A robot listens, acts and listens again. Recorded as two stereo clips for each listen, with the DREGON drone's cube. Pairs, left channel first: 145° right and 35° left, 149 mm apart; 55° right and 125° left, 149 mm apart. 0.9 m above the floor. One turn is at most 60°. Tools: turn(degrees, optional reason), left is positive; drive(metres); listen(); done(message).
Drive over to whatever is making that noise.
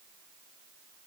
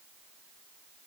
listen()
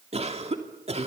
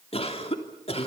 turn(degrees=-10, reason="The cough: 10° right.")
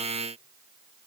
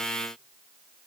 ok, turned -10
listen()
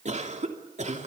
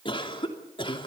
drive(metres=1.0)
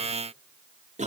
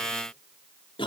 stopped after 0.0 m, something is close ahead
done("Blocked. The cough is further on, straight ahead.")